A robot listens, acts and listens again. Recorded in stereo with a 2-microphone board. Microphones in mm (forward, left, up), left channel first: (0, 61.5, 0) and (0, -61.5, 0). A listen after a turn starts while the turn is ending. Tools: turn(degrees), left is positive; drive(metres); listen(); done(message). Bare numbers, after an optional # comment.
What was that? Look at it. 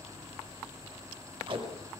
# The tape being pulled: about 45° right or 135° right.
turn(-45)
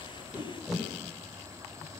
done("Facing the tape being pulled, over 4 m away.")